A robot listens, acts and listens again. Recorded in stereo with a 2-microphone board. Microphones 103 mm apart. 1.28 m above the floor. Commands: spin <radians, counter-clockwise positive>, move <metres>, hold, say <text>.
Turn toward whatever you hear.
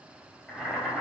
spin 0.52
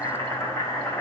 spin 2.62
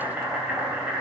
spin -0.26
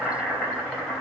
say Found it: boiling, straight ahead.